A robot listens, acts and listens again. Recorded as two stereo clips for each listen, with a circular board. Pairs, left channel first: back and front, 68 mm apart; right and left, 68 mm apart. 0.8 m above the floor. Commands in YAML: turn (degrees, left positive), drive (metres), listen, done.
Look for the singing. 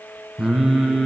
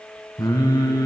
turn: -95
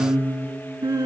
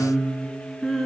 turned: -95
turn: -10
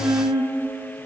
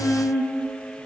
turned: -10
done: "Found it: singing, straight ahead, 2 to 4 m away."